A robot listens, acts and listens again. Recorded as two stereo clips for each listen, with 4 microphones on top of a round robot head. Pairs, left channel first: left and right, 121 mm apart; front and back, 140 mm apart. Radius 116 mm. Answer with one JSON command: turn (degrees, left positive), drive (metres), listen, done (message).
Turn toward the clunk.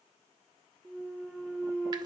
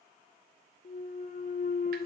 {"done": "Facing the clunk, under 1 m away."}